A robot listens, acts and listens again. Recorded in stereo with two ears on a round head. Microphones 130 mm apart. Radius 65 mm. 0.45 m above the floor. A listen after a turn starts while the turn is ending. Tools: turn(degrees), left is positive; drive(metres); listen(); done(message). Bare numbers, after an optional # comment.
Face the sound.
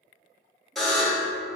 turn(30)
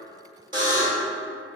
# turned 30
# So it is at 30° right.
turn(-30)
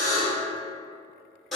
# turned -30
done("Facing the buzzer.")